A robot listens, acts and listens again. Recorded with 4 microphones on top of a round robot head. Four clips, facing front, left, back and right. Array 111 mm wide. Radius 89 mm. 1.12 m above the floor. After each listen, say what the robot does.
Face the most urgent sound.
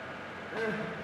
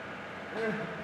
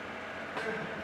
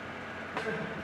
Turn 25° left.
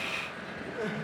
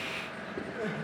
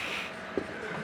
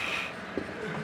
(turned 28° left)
Found it: crying, straight ahead.